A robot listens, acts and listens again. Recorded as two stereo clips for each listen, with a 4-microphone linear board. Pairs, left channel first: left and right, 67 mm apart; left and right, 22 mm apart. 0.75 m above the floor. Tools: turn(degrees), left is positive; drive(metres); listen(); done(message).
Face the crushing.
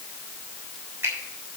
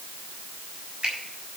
listen()
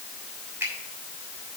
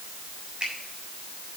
listen()
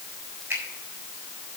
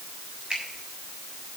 done("I can't make out crushing, only a finger snap.")